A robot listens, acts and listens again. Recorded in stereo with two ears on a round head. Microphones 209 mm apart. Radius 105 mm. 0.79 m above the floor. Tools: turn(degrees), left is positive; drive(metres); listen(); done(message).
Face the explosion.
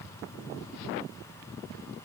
listen()
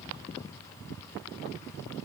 listen()
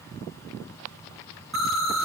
turn(degrees=30)
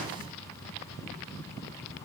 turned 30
listen()
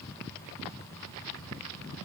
done("I heard an explosion, but can't make it out now. It was about 30° right or 150° left.")